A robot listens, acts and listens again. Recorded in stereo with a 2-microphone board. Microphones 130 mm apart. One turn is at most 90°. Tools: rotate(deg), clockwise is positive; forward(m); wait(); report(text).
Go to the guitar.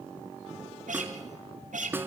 rotate(90)
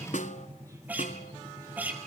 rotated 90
rotate(10)
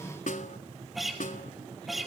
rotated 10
forward(1.0)
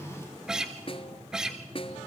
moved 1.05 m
forward(1.0)
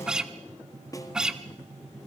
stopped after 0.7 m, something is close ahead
report("Arrived at the guitar, straight ahead.")